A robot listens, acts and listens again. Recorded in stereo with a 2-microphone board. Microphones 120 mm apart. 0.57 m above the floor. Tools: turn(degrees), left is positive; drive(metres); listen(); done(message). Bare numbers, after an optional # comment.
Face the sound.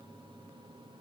listen()
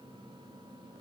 listen()
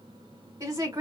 # The woman speaking: about 25° right or 155° right.
turn(-25)
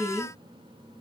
# So it is at 125° right.
turn(-125)
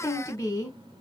# The woman speaking is now 30° left.
turn(30)
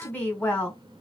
# The woman speaking is now 15° left.
turn(15)
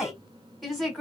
done("Found it: a woman speaking, straight ahead, 1 to 2 m away.")